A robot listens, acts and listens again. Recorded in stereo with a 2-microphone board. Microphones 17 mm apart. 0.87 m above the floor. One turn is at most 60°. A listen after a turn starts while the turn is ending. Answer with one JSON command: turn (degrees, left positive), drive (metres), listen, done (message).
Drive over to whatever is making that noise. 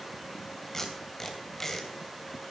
{"turn": 20}
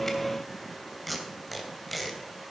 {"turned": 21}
{"drive": 1.0}
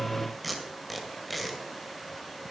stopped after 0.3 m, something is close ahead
{"done": "Blocked. The tape being pulled is further on, straight ahead."}